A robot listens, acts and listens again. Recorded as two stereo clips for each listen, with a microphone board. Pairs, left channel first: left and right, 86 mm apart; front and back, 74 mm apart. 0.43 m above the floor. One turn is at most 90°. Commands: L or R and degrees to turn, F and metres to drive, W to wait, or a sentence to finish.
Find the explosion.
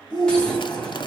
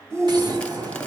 L90
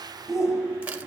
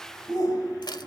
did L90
L80
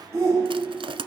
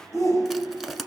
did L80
Facing where the explosion came from. I can't hear it now.